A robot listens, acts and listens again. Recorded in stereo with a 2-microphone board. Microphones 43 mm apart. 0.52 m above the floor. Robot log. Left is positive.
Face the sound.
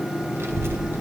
note: The child speaking: about 65° right or 115° right.
cmd yaw -65
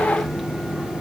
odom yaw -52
end: Found it: a child speaking, straight ahead, 1 to 2 m away.